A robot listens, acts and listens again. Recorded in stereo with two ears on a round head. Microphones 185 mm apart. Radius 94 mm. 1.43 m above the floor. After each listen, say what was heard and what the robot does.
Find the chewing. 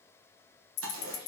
The chewing: about 65° right or 115° right. Turn 65° right.
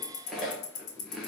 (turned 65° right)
Facing the chewing, 1 to 2 m away.